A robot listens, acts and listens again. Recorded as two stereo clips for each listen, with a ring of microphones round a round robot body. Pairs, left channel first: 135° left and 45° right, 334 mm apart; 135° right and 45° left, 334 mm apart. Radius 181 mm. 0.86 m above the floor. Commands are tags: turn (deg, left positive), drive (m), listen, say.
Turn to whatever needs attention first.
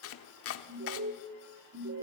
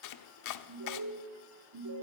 <turn deg="10"/>
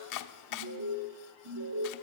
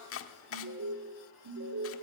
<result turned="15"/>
<say>Found it: an alarm, straight ahead.</say>